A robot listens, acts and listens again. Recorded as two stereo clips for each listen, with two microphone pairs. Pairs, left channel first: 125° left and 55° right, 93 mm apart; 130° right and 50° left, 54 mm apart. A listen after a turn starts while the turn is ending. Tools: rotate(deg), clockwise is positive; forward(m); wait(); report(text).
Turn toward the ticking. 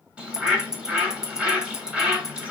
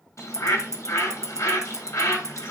rotate(-30)
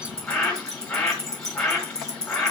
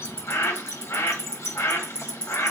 report("Found it: ticking, straight ahead.")